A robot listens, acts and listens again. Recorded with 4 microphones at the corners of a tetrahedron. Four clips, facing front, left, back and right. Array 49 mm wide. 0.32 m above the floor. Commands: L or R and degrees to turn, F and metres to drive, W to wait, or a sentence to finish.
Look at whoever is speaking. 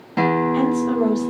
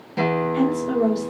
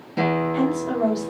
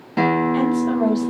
R80
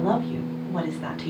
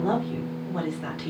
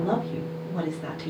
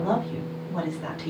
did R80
Facing the woman speaking.